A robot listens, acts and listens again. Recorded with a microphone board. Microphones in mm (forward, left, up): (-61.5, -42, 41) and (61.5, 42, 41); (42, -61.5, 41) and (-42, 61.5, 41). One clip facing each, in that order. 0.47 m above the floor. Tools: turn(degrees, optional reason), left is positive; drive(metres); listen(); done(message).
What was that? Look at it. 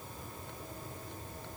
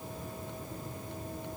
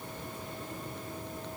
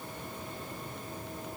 listen()
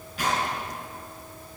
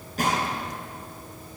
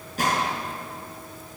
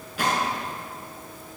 turn(degrees=-10, reason="The gunshot: 10° right.")
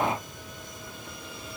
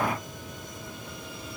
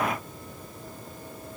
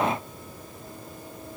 done("I heard a gunshot from this way, but can't make it out now.")